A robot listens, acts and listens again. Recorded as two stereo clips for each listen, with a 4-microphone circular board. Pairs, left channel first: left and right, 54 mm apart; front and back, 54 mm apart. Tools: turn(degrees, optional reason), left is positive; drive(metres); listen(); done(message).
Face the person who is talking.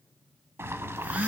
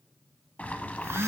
listen()
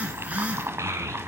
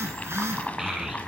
turn(degrees=-100, reason="The child speaking: 100° right.")
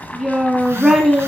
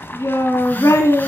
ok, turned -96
done("Found it: a child speaking, straight ahead, 1 to 2 m away.")